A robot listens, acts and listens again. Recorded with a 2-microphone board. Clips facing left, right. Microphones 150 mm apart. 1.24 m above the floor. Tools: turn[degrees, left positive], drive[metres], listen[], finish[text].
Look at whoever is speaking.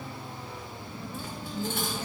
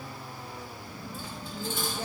Thought: The woman speaking: about 60° right or 120° right.
Action: turn[-60]
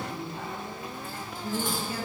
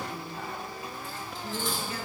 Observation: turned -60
Thought: So it is at 30° left.
Action: turn[30]
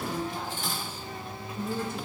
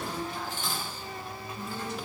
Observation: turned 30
Thought: The woman speaking is now 55° left.
Action: turn[55]
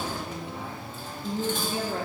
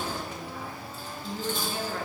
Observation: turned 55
Thought: The woman speaking is now 20° left.
Action: turn[20]
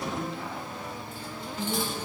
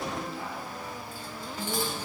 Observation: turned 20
Action: finish[Found it: a woman speaking, straight ahead, 1 to 2 m away.]